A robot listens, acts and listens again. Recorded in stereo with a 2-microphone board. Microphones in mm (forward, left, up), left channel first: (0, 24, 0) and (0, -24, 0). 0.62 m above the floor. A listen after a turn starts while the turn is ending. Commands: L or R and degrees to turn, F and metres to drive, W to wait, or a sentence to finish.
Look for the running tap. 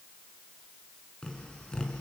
W
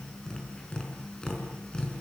W
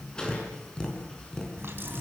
R50
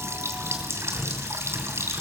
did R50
R75
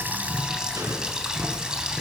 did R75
R15
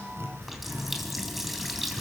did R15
Facing the running tap, 2 to 4 m away.